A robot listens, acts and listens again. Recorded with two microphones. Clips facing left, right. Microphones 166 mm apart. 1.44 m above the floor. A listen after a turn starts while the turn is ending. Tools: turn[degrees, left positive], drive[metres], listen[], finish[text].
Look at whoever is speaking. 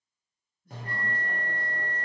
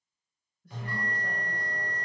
Action: turn[-90]
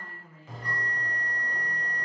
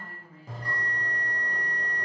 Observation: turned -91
Action: listen[]
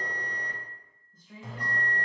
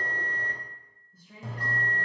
Action: finish[Found it: a woman speaking, straight ahead, 1 to 2 m away.]